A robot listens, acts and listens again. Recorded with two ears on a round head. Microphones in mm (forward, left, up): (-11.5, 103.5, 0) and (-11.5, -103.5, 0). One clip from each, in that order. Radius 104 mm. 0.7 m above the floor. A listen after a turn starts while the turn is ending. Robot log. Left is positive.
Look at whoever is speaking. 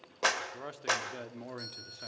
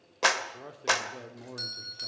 note: The man speaking: about 60° left or 120° left.
cmd yaw +60
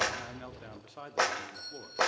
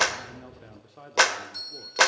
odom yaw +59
note: So it is at 40° left.
cmd yaw +40
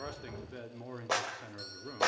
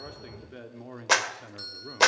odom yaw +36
end: Facing the man speaking, 1 to 2 m away.